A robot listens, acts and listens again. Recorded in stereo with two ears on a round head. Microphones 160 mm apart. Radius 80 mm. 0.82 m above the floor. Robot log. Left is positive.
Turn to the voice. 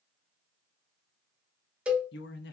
note: The man speaking: about 65° left or 115° left.
cmd yaw +65
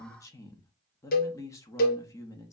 note: So it is at 20° left.
cmd yaw +20
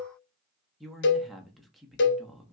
end: Found it: a man speaking, straight ahead.